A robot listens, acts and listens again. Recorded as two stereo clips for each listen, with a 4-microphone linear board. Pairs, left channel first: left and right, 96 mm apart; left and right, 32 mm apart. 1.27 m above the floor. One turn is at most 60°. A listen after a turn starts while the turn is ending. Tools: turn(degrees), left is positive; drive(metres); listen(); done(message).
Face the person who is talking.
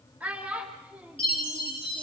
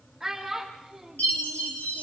turn(degrees=-30)
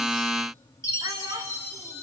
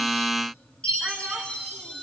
listen()
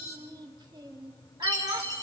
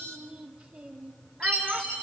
turn(degrees=-60)
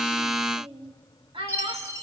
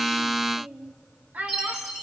turn(degrees=-60)
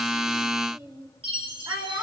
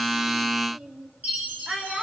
turn(degrees=-35)
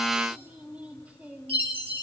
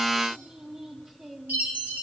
turn(degrees=-15)
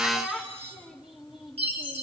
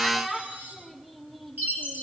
done("Found it: a child speaking, straight ahead, 2 to 4 m away.")